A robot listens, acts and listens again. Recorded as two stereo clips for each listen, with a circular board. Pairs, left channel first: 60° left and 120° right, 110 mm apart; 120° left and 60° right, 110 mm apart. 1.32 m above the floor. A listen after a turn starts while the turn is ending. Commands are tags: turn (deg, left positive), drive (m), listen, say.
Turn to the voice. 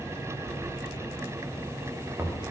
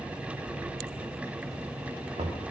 <listen/>
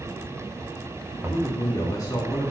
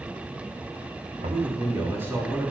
<say>Found it: a man speaking, straight ahead.</say>